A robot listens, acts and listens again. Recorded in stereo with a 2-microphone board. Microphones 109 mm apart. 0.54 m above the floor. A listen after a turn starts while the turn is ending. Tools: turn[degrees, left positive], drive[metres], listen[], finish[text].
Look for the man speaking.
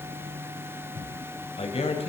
Thought: The man speaking: about 65° left or 115° left.
Action: turn[65]
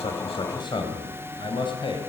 Thought: So it is at 50° left.
Action: turn[50]
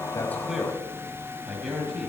Action: finish[Facing the man speaking, over 4 m away.]